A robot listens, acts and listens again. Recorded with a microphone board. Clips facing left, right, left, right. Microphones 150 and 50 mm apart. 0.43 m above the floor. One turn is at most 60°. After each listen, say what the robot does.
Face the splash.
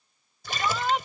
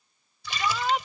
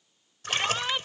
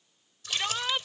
Turn 50° left.
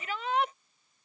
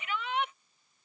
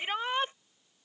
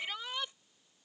Keep listening.
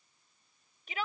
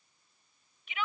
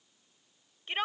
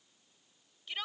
I heard a splash, but can't make it out now. It was about straight ahead or 80° left.